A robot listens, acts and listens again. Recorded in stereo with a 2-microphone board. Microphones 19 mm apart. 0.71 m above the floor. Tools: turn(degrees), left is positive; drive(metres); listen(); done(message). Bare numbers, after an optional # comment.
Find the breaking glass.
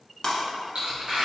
# The breaking glass: about 40° left or 140° left.
turn(40)
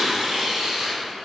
listen()
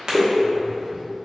done("I heard breaking glass, but can't make it out now. It was about straight ahead or 100° left.")